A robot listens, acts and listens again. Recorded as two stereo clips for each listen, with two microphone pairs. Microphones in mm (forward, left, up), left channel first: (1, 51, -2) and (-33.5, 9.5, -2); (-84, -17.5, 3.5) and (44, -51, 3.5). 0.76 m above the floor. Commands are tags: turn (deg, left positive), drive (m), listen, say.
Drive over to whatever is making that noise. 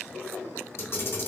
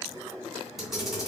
<turn deg="75"/>
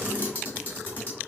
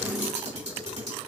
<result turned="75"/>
<drive m="1.0"/>
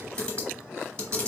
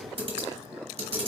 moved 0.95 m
<turn deg="-15"/>
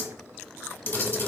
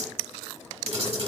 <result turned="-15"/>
<drive m="1.0"/>
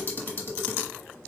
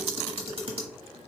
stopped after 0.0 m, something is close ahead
<say>Arrived at the camera shutter, straight ahead.</say>